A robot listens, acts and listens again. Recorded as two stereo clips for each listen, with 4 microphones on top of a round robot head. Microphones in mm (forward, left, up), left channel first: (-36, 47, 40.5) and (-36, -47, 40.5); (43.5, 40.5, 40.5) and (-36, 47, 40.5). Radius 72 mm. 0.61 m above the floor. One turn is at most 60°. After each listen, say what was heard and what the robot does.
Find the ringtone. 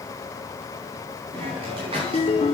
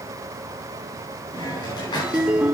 The ringtone: 95° left. Turn 60° left.
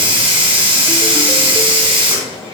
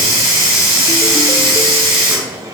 Nothing new. It was at 35° left. Turn 35° left.
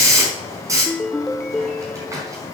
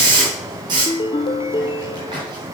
Facing the ringtone, under 1 m away.